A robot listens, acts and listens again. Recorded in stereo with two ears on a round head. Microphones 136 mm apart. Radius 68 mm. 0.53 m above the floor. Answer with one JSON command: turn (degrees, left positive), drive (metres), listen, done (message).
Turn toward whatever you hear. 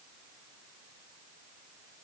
{"listen": true}
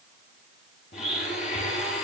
{"turn": 55}
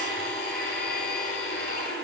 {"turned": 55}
{"turn": 70}
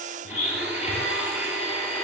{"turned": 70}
{"turn": -10}
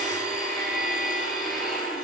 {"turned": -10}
{"done": "Facing the blender."}